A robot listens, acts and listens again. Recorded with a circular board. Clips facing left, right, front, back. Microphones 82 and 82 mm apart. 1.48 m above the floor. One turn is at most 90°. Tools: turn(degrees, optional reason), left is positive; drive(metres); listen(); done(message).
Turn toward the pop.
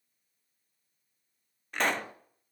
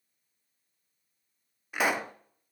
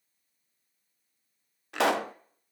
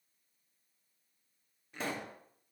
turn(degrees=-10, reason="The pop: 10° right.")
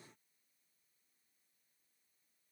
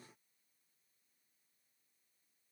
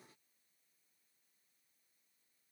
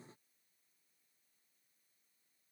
done("Facing where the pop came from. I can't hear it now.")